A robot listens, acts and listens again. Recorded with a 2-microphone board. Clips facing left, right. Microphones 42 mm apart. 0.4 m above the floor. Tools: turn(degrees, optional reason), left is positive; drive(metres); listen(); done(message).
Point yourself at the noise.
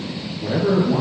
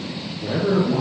turn(degrees=30)
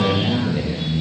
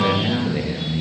turn(degrees=-20, reason="So it is at 20° right.")
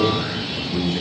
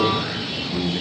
done("Facing the man speaking.")